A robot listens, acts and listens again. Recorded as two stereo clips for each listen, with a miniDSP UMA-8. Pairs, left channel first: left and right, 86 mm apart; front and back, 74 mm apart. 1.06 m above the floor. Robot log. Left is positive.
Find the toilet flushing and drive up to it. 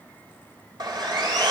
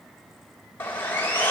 cmd idle
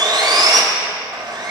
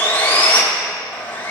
cmd idle
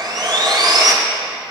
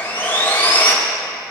end: I can't make out a toilet flushing to turn to.